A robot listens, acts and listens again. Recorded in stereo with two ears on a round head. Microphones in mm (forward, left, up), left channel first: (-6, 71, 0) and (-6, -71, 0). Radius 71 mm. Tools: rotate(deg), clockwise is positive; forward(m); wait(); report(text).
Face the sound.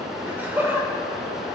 rotate(30)
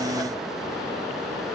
wait()
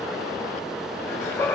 rotate(-15)
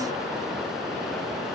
wait()
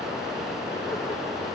wait()
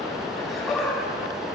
report("Found it: laughter, straight ahead, over 4 m away.")